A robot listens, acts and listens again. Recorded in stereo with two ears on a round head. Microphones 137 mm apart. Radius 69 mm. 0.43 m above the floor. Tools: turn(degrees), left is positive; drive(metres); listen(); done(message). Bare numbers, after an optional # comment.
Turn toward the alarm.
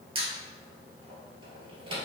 listen()
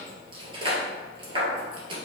listen()
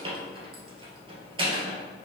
done("I can't make out an alarm, only a squeak.")